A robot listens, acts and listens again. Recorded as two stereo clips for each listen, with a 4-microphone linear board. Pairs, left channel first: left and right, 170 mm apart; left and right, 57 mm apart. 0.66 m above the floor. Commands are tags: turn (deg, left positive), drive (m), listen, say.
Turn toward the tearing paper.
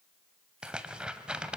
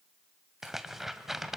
<turn deg="-30"/>
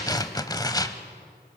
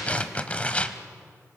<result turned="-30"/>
<turn deg="25"/>
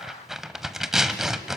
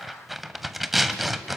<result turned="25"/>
<say>Facing the tearing paper, under 1 m away.</say>